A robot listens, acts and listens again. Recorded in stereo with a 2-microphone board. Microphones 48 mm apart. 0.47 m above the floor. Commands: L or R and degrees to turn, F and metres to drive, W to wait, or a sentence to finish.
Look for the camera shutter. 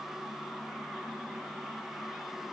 W
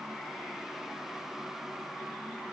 W
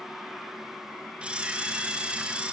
R25
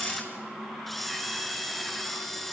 Found it: a camera shutter, straight ahead, 2 to 4 m away.